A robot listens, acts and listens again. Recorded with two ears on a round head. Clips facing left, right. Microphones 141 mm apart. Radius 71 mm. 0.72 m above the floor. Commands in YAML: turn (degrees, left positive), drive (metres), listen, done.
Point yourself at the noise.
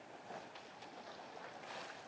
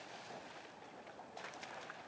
listen: true
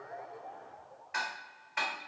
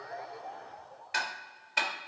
turn: -40
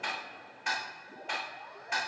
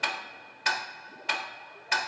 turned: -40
turn: -100
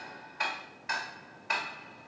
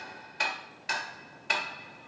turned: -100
turn: -35
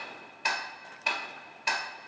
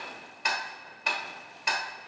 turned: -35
done: "Found it: ticking, straight ahead, 1 to 2 m away."